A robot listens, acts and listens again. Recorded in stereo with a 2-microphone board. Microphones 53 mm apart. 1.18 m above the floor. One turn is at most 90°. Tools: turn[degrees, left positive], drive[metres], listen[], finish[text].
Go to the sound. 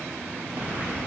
Thought: The breathing: about 50° right or 130° right.
Action: turn[-50]
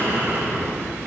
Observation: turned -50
Thought: So it is at 80° right.
Action: turn[-80]
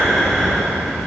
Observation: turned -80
Action: drive[1.0]
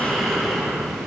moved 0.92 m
Action: drive[1.0]
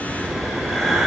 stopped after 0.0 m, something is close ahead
Action: finish[Arrived at the breathing, straight ahead.]